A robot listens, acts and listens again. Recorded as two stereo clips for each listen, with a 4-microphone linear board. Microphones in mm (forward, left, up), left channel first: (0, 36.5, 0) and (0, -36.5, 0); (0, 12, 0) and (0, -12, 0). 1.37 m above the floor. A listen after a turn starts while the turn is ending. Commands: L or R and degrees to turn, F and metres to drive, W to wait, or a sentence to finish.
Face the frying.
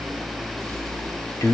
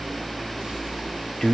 W
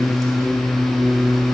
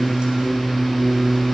W
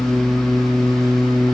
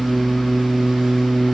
I can't make out frying to turn to.